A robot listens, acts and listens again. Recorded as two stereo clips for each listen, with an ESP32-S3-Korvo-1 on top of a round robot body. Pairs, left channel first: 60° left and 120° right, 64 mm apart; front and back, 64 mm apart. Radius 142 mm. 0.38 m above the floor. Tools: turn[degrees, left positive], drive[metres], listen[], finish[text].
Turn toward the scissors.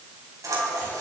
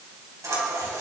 Thought: The scissors: 150° right.
Action: turn[-150]
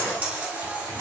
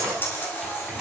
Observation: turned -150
Thought: The scissors is now 55° right.
Action: turn[-55]
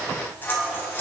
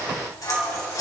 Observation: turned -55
Action: finish[Facing the scissors.]